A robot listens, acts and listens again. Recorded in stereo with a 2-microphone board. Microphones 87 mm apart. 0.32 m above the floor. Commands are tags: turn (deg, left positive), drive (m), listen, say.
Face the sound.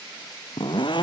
<turn deg="65"/>
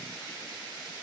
<listen/>
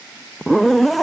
<say>Facing the zipper.</say>